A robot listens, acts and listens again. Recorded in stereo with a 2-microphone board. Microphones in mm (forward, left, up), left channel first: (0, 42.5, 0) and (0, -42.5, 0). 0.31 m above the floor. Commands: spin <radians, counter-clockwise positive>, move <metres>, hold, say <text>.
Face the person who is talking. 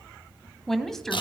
spin 0.52
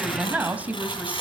spin -0.35
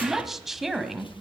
say Facing the woman speaking, 1 to 2 m away.